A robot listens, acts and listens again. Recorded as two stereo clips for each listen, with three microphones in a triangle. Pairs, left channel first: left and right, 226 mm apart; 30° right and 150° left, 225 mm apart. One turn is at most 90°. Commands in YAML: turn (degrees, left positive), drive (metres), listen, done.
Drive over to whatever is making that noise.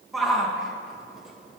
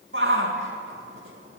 turn: 90
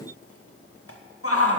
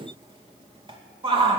turn: 85
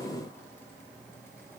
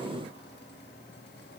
listen: true
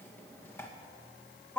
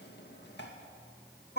turn: 10
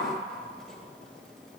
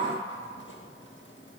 listen: true
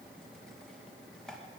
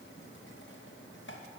listen: true
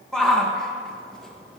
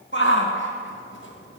drive: 1.0
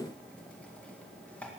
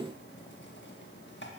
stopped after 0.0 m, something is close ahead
listen: true
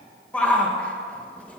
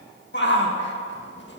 done: "Something is in my way. I am facing the shout but have not reached it."